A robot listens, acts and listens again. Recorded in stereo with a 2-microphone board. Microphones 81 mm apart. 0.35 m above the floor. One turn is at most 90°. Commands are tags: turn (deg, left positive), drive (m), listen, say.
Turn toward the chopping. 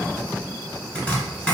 <turn deg="15"/>
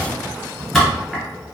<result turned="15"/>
<say>Facing the chopping, 1 to 2 m away.</say>